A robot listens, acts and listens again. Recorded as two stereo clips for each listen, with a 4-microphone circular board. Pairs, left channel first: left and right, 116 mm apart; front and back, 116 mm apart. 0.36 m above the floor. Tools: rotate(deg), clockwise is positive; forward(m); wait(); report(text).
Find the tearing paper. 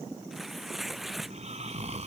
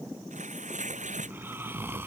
rotate(-180)
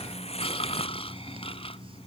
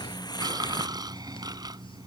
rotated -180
rotate(-55)
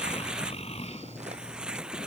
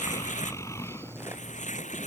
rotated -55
report("Found it: tearing paper, straight ahead.")